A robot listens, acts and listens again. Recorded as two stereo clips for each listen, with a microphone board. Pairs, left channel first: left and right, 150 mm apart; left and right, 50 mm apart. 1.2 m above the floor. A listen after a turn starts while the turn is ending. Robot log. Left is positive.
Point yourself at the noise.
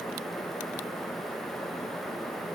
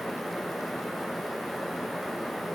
cmd idle
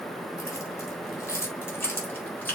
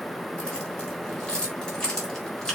cmd yaw +30
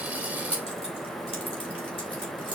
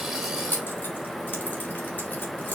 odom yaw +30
note: So it is at 140° left.
cmd yaw +140
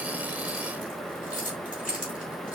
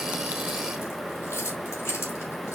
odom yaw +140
note: The keys jangling is now 60° left.
cmd yaw +60
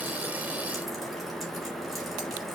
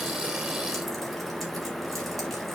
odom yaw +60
cmd idle
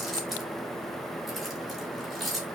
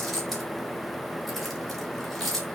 end: Facing the keys jangling, 2 to 4 m away.